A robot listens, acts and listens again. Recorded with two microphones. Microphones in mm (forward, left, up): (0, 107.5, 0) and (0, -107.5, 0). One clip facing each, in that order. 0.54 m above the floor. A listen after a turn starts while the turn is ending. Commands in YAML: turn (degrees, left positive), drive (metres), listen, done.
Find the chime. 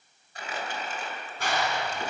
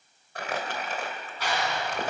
listen: true
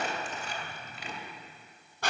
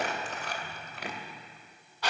listen: true
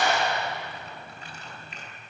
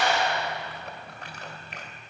done: "I can't make out a chime, only a clap and crumpling."